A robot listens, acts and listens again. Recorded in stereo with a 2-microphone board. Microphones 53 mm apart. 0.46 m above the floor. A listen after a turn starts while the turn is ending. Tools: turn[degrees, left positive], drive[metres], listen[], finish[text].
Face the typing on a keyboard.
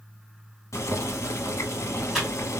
Action: turn[30]
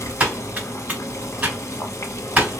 Thought: So it is at 30° right.
Action: turn[-30]
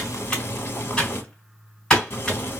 Thought: The typing on a keyboard is now 20° left.
Action: turn[20]
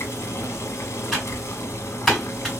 Action: finish[Found it: typing on a keyboard, straight ahead, 1 to 2 m away.]